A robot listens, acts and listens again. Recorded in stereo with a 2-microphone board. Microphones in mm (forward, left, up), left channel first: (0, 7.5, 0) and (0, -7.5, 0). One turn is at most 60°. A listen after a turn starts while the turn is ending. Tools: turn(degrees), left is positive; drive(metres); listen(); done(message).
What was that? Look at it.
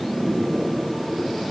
listen()
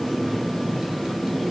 listen()
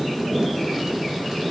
done("I can't make out anything to turn to.")